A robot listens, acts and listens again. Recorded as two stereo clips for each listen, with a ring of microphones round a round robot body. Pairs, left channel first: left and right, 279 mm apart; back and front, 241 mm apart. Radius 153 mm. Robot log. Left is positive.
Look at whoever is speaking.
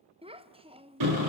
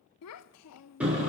note: The child speaking: 160° right.
cmd yaw -160
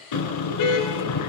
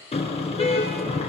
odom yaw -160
cmd idle
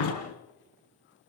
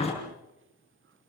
cmd idle
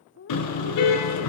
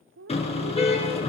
note: The child speaking is now 40° left.
cmd yaw +40
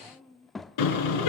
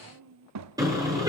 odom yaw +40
end: Found it: a child speaking, straight ahead.